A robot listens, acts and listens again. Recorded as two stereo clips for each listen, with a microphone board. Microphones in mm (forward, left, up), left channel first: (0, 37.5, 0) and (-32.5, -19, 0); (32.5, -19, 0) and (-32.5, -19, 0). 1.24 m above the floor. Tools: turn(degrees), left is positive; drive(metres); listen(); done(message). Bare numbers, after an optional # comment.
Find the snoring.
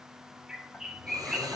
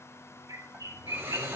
# The snoring: 115° right.
turn(-115)
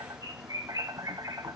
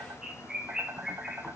listen()
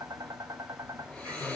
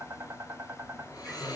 # The snoring is now 15° right.
turn(-15)
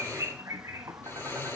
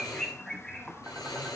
done("Facing the snoring.")